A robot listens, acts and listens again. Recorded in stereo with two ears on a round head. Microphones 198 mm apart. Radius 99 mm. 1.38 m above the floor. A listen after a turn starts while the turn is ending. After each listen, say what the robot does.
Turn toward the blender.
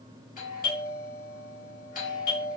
Keep listening.
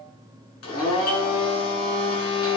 Turn 65° left.
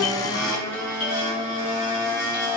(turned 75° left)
Turn 15° left.
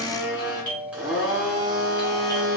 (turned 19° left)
Found it: a blender, straight ahead.